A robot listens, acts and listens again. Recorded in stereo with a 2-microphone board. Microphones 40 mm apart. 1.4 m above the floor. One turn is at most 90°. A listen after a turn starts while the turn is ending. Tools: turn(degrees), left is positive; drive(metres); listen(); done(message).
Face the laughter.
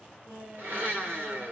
turn(degrees=-65)
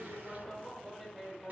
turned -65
done("Facing the laughter, over 4 m away.")